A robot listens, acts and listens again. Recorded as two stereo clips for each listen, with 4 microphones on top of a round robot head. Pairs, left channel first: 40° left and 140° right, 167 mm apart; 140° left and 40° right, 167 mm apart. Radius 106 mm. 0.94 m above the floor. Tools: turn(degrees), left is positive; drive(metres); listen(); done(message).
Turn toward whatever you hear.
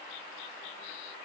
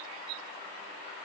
listen()
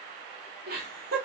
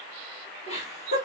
turn(degrees=-170)
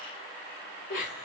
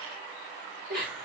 done("Facing the laughter, 2 to 4 m away.")